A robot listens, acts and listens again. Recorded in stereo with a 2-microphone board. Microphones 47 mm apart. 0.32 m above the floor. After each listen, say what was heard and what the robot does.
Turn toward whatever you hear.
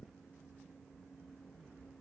Keep listening.
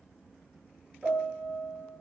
The piano: about 20° right or 160° right. Turn 20° right.
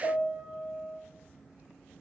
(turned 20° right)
So it is at 140° right. Turn 140° right.
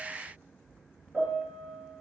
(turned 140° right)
The piano is now 10° right. Turn 10° right.
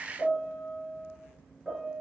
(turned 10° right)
Facing the piano, 2 to 4 m away.